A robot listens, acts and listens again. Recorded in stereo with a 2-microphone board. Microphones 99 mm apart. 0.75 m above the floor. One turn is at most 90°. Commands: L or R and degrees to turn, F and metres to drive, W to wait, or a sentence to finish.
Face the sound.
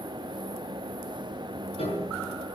L90
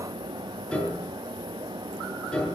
L10
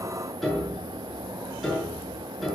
Facing the piano.